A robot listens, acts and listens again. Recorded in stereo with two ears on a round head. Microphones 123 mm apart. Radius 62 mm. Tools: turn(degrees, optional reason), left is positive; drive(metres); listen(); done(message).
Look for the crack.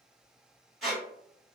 listen()
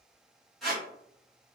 listen()
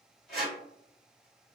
done("I can't make out a crack, only a squeak.")